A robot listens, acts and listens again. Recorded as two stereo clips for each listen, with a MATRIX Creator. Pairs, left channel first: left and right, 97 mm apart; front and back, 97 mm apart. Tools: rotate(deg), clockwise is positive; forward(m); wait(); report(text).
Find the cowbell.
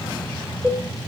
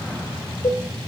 rotate(15)
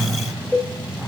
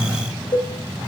report("Found it: a cowbell, straight ahead, 2 to 4 m away.")